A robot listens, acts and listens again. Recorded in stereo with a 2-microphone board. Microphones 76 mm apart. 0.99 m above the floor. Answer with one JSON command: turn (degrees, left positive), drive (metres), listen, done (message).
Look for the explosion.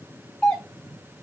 {"listen": true}
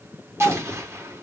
{"turn": -35}
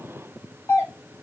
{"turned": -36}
{"listen": true}
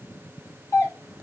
{"done": "I heard an explosion, but can't make it out now. It was about straight ahead or 110° right."}